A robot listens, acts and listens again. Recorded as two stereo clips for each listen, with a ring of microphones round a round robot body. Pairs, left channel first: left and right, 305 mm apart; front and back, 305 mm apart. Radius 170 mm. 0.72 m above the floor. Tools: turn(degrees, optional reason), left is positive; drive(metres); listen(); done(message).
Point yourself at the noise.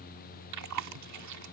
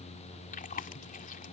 turn(degrees=-65, reason="The chewing: 65° right.")
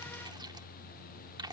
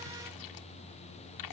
turn(degrees=-15, reason="The chewing is now 15° right.")
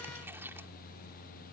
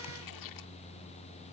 listen()
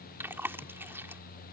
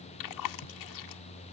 done("Facing the chewing.")